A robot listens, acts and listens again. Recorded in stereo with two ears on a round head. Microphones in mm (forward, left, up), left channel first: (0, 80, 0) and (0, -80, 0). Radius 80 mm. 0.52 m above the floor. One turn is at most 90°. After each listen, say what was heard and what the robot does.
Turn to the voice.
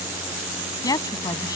The woman speaking: about 20° left or 160° left. Turn 20° left.
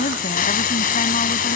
So it is at 140° left. Turn 90° left.
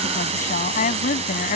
The woman speaking is now 45° left. Turn 45° left.
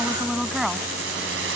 Found it: a woman speaking, straight ahead.